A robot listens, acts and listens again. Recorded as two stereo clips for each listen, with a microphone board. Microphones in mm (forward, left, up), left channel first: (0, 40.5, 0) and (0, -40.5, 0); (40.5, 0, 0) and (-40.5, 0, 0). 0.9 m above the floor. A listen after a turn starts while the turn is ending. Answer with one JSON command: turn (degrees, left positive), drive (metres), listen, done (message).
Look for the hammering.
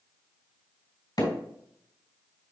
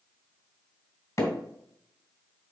{"turn": 50}
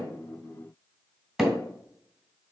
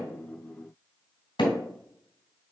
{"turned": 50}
{"done": "Found it: hammering, straight ahead, 2 to 4 m away."}